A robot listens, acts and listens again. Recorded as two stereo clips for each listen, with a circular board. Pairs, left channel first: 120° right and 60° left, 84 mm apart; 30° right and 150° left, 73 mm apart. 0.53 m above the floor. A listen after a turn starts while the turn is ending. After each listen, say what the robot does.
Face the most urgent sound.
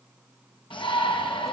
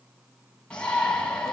Turn 105° right.
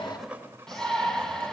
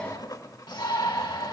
Turn 35° right.
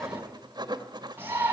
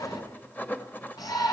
Facing the shout.